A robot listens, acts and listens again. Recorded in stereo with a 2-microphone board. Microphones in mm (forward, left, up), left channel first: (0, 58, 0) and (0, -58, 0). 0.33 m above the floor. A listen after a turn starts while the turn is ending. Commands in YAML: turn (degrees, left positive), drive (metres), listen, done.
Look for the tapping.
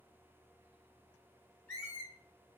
listen: true
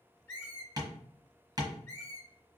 turn: -35
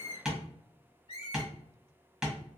done: "Found it: tapping, straight ahead."